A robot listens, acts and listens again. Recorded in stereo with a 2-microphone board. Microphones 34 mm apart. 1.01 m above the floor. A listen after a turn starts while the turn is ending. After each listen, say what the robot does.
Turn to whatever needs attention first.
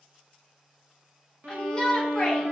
Turn 20° left.
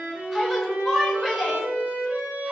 Facing the shout.